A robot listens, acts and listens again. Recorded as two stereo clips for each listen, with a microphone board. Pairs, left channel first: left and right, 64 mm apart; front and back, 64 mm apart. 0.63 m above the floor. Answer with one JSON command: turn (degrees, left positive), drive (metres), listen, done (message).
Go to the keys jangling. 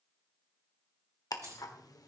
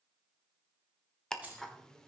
{"turn": -110}
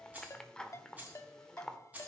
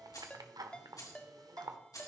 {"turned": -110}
{"turn": -20}
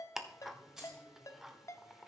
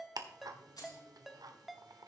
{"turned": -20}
{"drive": 1.0}
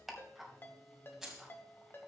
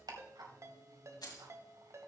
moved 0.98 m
{"drive": 1.0}
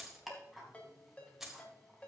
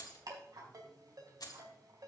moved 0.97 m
{"drive": 1.0}
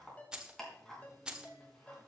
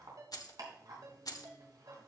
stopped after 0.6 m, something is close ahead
{"turn": -10}
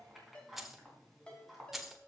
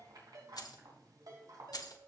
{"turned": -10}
{"done": "I am next to the keys jangling."}